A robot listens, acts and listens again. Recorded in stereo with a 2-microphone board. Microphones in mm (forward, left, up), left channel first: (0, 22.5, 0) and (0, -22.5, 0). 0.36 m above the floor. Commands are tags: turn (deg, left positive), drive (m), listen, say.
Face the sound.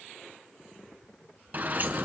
<turn deg="-40"/>
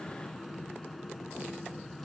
<listen/>
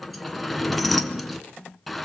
<say>Found it: a sliding door, straight ahead.</say>